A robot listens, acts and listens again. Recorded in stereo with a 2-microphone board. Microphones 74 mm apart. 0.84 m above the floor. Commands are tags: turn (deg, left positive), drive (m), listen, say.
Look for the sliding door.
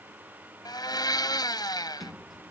<turn deg="30"/>
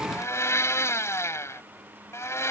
<listen/>
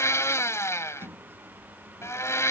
<turn deg="-30"/>
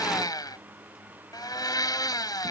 <listen/>
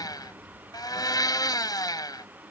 <say>Facing the sliding door.</say>